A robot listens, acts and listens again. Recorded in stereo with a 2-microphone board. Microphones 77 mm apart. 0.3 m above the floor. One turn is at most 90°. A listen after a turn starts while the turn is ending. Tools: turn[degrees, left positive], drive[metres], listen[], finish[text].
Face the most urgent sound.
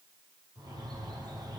Action: listen[]
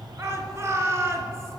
Thought: The shout: about 35° right or 145° right.
Action: turn[-35]
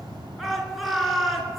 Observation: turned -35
Action: finish[Found it: a shout, straight ahead.]